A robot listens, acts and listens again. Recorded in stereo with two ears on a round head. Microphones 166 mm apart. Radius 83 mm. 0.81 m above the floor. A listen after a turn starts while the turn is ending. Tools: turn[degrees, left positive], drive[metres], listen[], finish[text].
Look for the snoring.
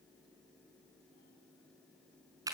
Action: listen[]
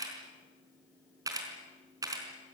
Action: listen[]
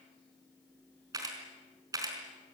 Action: finish[I can't make out snoring to turn to.]